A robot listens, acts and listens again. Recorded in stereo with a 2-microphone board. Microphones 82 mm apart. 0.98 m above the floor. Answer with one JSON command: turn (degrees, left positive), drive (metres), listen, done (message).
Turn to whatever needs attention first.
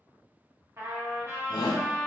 {"turn": 60}
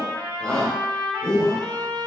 {"turn": 15}
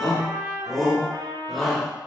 {"done": "Facing the shout, under 1 m away."}